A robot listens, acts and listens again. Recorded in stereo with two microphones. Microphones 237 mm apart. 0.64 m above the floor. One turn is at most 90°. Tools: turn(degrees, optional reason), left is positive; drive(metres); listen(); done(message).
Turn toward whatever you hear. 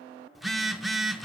turn(degrees=30)
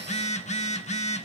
turn(degrees=90, reason="So it is at 150° left.")
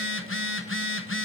turn(degrees=60, reason="The phone buzzing is now 60° left.")
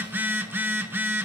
turn(degrees=-10, reason="The phone buzzing is now 10° right.")
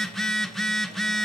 done("Found it: a phone buzzing, straight ahead, under 1 m away.")